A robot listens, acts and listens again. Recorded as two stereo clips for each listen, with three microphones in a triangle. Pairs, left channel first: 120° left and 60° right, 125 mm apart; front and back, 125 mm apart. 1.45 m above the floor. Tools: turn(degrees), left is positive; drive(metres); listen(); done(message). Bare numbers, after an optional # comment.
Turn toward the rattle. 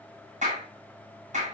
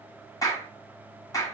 listen()
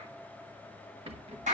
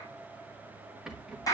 # The rattle: 95° right.
turn(-95)
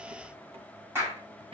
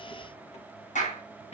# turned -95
listen()
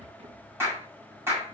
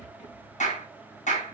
# The rattle is now 25° right.
turn(-25)
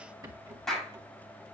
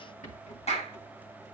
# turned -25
done("Found it: a rattle, straight ahead, 1 to 2 m away.")